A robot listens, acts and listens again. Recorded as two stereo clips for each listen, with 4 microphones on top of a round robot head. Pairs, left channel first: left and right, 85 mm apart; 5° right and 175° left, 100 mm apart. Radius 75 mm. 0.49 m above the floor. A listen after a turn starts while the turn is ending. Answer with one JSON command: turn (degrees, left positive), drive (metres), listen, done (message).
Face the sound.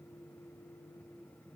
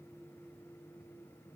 {"listen": true}
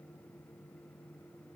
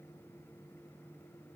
{"listen": true}
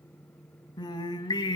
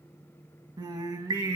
{"turn": 125}
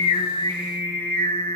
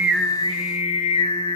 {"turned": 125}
{"turn": 20}
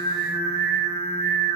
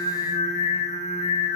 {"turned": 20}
{"done": "Facing the singing, 1 to 2 m away."}